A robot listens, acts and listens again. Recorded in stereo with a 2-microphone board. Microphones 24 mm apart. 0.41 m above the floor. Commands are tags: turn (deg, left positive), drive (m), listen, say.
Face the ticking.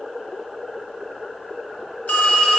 <listen/>
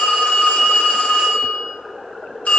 <listen/>
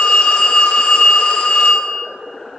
<say>I can't make out ticking to turn to.</say>